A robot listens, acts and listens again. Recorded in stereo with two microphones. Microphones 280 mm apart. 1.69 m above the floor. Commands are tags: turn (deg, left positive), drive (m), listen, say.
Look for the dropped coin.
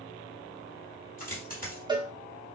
<turn deg="30"/>
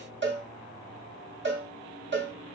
<listen/>
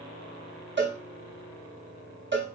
<say>I heard a dropped coin, but can't make it out now. It was about straight ahead or 120° left.</say>